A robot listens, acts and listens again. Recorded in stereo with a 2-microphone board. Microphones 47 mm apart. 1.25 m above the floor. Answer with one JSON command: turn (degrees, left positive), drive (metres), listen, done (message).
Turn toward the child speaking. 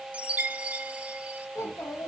{"turn": 90}
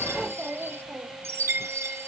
{"turn": -35}
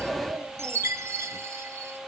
{"turn": -60}
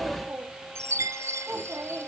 {"turn": -45}
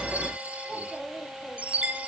{"turn": 10}
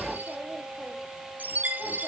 {"listen": true}
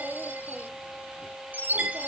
{"listen": true}
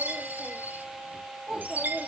{"done": "Found it: a child speaking, straight ahead, 1 to 2 m away."}